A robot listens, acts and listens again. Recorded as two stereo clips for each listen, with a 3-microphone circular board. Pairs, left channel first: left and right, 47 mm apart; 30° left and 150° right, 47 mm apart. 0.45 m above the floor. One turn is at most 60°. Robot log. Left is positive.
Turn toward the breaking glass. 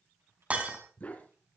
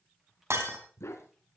note: The breaking glass: 150° right.
cmd yaw -60
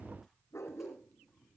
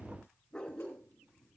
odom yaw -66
note: Nothing new. It was at 85° right.
cmd yaw -60
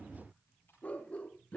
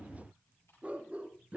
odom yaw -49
note: Nothing new. It was at 35° right.
cmd yaw -35
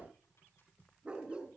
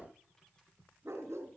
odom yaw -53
note: Nothing new. It was at 20° left.
cmd yaw +20
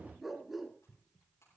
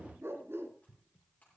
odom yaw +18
end: I heard breaking glass from this way, but can't make it out now.